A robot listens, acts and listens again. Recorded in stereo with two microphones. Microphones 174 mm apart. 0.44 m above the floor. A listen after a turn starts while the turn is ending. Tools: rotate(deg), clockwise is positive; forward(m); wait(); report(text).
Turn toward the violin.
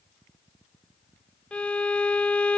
rotate(-30)
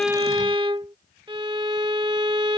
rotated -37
rotate(30)
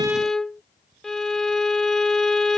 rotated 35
report("Facing the violin.")